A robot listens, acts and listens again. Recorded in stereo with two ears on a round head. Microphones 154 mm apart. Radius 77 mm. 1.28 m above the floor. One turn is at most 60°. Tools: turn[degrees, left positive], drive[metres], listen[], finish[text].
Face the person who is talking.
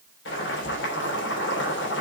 Action: listen[]
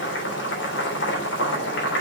Action: listen[]
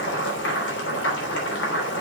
Action: finish[I can't make out anyone speaking to turn to.]